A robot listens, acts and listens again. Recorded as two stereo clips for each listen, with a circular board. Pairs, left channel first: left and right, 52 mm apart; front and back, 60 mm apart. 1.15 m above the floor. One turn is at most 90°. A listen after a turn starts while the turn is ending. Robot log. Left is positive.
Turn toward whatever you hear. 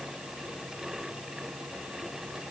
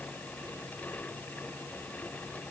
cmd idle
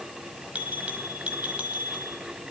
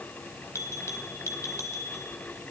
note: The bell: 25° right.
cmd yaw -25
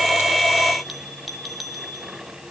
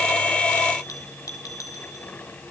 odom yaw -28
end: Facing the bell.